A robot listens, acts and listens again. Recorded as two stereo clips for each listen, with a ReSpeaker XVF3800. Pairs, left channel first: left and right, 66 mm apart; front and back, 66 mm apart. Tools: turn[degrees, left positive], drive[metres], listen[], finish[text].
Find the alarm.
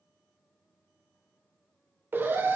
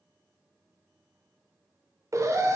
Thought: The alarm: 145° right.
Action: turn[-145]
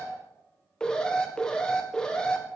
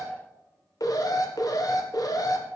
Thought: The alarm is now 10° left.
Action: turn[10]
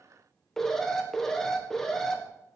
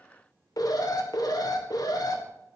Action: finish[Facing the alarm.]